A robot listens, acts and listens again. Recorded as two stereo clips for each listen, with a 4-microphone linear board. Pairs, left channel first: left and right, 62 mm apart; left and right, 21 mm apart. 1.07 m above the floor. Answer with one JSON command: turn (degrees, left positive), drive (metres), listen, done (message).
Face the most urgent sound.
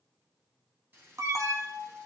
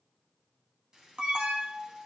{"turn": -60}
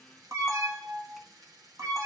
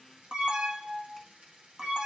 {"turn": -55}
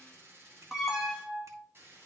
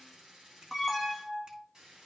{"done": "Found it: an alarm, straight ahead."}